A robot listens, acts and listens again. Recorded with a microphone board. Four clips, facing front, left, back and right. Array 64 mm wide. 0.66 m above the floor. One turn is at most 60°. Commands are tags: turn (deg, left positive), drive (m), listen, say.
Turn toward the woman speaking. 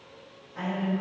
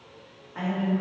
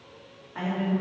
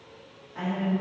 <turn deg="60"/>
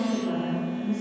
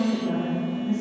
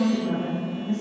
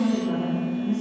<turn deg="60"/>
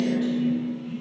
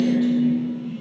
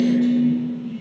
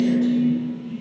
<turn deg="60"/>
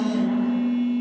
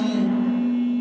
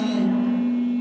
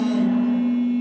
<turn deg="15"/>
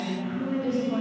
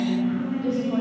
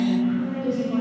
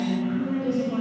<turn deg="35"/>
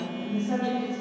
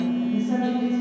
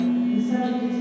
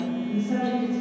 <turn deg="15"/>
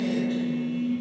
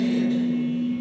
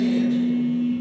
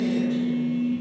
<listen/>
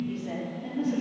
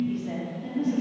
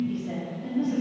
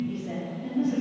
<say>Found it: a woman speaking, straight ahead.</say>